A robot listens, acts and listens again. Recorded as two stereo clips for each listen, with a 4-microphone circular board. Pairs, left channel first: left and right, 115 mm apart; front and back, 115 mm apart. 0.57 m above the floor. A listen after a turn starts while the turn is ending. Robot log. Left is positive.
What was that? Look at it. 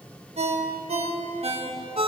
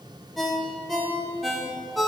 note: The ringtone: 90° right.
cmd yaw -90
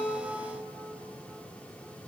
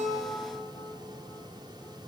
cmd idle
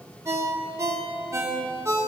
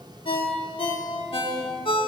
note: The ringtone is now 30° right.
cmd yaw -30
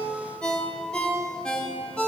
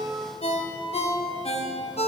end: Facing the ringtone, under 1 m away.